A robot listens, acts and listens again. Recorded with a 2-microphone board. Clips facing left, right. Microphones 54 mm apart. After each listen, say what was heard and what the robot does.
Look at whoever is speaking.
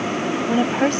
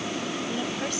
The woman speaking: about 50° left or 130° left. Turn 50° left.
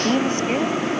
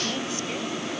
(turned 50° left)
So it is at 60° left. Turn 60° left.
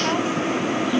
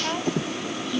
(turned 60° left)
The woman speaking is now 15° left. Turn 15° left.
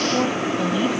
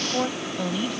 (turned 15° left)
Found it: a woman speaking, straight ahead.